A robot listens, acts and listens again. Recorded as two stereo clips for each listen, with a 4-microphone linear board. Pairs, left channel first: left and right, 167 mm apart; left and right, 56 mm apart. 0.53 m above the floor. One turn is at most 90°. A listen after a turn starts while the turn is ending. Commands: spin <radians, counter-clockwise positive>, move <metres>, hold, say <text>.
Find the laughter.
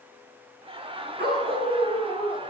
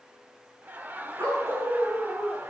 spin -0.61
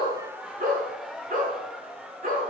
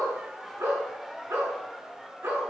say Facing the laughter, 1 to 2 m away.